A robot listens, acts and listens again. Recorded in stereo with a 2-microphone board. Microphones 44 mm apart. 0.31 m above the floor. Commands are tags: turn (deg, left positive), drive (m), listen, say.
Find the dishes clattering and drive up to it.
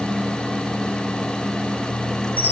<listen/>
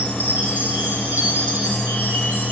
<listen/>
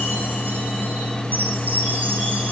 <say>I can't make out dishes clattering to turn to.</say>